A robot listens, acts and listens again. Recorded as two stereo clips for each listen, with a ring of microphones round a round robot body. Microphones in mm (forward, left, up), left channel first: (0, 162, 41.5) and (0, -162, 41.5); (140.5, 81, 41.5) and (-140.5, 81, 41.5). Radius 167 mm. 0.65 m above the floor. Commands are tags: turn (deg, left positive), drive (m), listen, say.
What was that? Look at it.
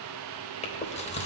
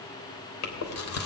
<turn deg="20"/>
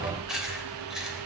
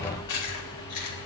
<say>Facing the chewing.</say>